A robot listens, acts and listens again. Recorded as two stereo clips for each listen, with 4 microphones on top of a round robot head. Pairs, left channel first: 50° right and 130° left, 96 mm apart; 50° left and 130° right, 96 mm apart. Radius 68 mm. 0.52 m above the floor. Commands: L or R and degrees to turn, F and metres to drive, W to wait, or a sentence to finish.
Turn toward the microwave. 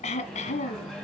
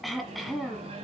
R135
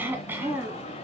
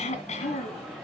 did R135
R40
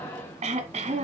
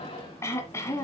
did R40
L15
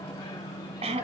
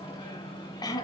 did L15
Found it: a microwave, straight ahead, 2 to 4 m away.